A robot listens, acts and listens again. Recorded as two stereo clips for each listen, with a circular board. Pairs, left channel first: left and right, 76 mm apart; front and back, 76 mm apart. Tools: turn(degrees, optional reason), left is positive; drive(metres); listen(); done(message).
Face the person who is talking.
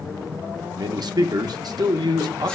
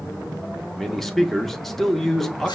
turn(degrees=-85, reason="The man speaking: 85° right.")
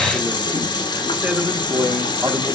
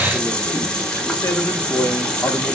turn(degrees=-20, reason="The man speaking is now 20° right.")
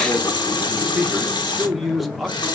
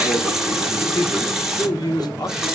done("Facing the man speaking, under 1 m away.")